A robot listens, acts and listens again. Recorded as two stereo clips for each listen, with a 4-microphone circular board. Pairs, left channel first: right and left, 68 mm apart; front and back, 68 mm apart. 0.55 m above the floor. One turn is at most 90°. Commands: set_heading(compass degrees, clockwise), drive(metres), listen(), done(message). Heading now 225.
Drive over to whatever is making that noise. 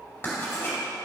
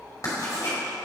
set_heading(260)
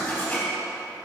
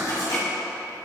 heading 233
set_heading(258)
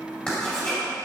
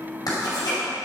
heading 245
set_heading(260)
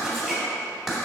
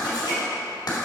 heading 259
drive(1.0)
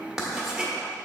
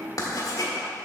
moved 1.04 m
drive(1.0)
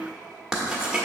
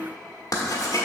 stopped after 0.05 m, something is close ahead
set_heading(249)
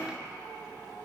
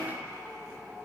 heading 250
done("I am next to the writing.")